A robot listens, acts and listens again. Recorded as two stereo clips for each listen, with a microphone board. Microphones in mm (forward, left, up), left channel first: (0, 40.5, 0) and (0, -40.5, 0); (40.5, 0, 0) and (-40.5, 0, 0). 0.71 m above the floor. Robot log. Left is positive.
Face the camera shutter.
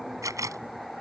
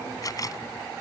note: The camera shutter: 40° right.
cmd yaw -40
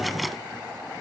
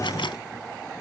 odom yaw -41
cmd idle
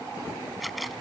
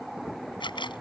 end: Found it: a camera shutter, straight ahead.